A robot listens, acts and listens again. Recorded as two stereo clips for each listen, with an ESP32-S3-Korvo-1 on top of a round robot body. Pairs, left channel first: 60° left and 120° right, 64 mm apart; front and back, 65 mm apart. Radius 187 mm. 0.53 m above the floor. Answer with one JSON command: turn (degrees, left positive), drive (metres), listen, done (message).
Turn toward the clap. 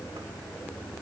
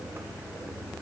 {"listen": true}
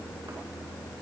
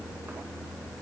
{"listen": true}
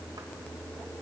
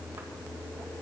{"done": "I can't make out a clap to turn to."}